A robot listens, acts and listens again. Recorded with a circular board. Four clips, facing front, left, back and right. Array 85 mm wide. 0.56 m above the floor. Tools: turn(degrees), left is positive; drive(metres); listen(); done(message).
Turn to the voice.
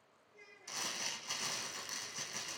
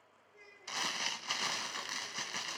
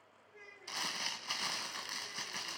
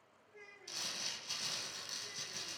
turn(degrees=-150)
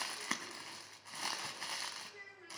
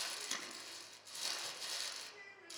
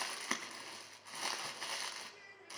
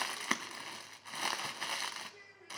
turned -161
turn(degrees=10)
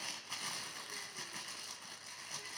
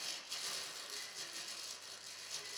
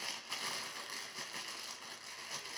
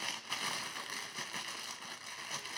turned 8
listen()
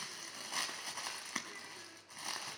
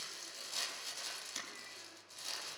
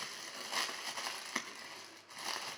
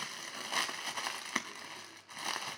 listen()
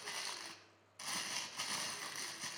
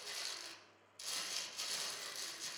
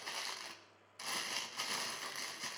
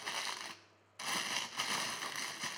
done("I heard a child speaking from this way, but can't make it out now.")